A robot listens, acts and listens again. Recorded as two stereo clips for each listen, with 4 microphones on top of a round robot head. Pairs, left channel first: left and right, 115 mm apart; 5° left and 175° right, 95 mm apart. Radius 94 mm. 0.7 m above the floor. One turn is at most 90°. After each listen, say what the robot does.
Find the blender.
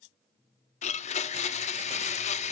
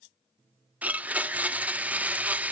Turn 90° left.
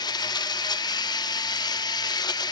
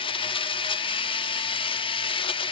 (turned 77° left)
Turn 35° left.
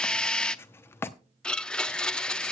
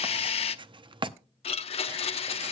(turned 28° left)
Found it: a blender, straight ahead.